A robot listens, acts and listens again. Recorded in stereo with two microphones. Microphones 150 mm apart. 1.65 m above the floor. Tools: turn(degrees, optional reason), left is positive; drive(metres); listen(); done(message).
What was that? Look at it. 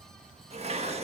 turn(degrees=-45, reason="The dishes clattering: about 45° right or 135° right.")
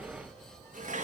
turn(degrees=-80, reason="So it is at 80° right.")
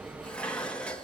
turn(degrees=10, reason="The dishes clattering is now 10° left.")
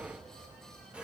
done("Found it: dishes clattering, straight ahead.")